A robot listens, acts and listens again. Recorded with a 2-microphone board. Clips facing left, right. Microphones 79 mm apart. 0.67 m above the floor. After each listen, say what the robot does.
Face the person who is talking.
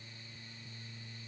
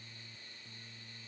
Keep listening.
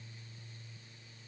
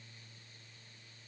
Keep listening.
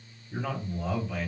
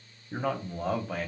Turn 45° right.
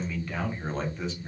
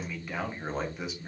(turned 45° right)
Turn 10° right.
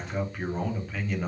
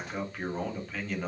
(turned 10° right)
Facing the man speaking, 1 to 2 m away.